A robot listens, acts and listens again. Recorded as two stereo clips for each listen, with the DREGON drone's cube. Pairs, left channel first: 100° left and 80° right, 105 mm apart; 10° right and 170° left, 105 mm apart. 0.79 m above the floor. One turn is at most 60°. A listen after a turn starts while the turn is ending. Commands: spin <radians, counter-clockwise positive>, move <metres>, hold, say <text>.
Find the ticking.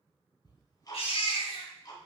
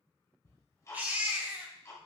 spin 0.87
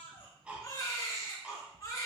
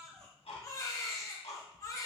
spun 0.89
say Facing the ticking.